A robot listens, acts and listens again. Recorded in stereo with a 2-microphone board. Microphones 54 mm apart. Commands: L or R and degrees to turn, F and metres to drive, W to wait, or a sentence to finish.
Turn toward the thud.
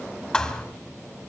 L30
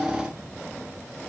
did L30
W
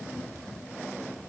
I heard a thud, but can't make it out now. It was about 20° right or 140° left.